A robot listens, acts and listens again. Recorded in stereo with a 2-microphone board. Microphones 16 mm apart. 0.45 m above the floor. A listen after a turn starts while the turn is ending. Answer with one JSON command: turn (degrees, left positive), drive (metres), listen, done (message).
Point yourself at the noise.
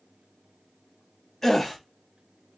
{"turn": 30}
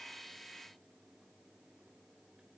{"listen": true}
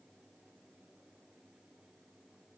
{"done": "I heard a gasp, but can't make it out now. It was about 15° right or 135° left."}